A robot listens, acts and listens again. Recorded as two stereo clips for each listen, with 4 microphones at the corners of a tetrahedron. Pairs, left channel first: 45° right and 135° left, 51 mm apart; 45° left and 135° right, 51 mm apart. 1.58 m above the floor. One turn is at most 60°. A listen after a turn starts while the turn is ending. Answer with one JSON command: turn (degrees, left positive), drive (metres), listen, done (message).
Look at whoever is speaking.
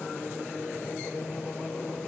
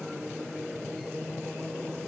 {"listen": true}
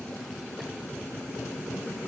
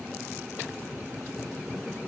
{"listen": true}
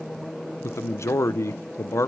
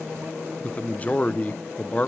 {"turn": -20}
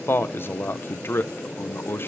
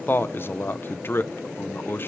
{"done": "Facing the man speaking."}